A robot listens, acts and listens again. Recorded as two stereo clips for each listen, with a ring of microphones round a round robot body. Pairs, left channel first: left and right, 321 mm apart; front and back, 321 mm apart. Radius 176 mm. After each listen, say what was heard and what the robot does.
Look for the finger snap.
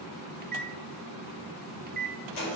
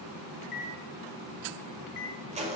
Keep listening.
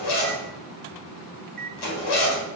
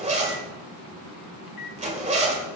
Keep listening.
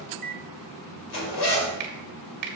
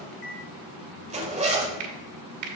The finger snap: 135° right. Turn 135° right.
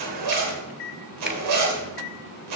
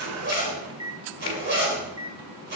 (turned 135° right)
Keep listening.
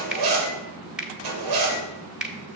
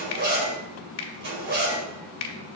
Facing the finger snap, 1 to 2 m away.